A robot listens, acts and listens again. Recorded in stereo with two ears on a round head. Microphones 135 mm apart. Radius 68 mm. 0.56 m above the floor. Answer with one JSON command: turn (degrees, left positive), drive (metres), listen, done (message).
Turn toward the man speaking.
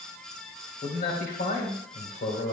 {"turn": 60}
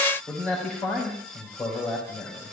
{"done": "Facing the man speaking, 2 to 4 m away."}